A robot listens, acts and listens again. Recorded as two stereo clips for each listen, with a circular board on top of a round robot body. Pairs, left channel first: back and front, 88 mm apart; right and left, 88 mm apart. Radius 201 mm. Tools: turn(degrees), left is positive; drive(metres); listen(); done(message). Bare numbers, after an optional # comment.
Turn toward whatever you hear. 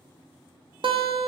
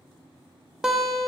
done("Found it: a guitar, straight ahead, 1 to 2 m away.")